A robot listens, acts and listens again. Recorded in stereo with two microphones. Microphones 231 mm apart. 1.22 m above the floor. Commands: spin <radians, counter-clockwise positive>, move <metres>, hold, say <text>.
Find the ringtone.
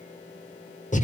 hold
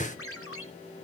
spin 1.57
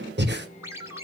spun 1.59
spin -0.17
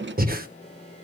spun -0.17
say Found it: a ringtone, straight ahead.